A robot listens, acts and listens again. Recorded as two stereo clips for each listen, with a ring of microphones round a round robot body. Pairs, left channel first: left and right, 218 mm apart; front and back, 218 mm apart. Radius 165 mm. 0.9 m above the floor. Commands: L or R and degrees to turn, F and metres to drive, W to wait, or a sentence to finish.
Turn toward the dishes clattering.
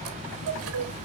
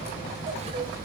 W
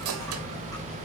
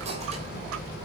W
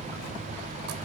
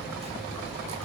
I can't make out dishes clattering, only a chime.